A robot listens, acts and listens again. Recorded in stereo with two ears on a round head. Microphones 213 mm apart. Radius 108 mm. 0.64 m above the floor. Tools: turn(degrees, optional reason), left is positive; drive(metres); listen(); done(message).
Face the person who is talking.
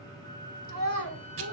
turn(degrees=60, reason="The child speaking: about 60° left or 120° left.")
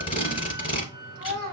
turn(degrees=60, reason="So it is at 60° left.")
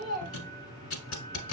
turn(degrees=15, reason="The child speaking is now 15° left.")
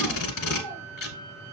listen()
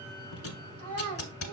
done("Facing the child speaking, over 4 m away.")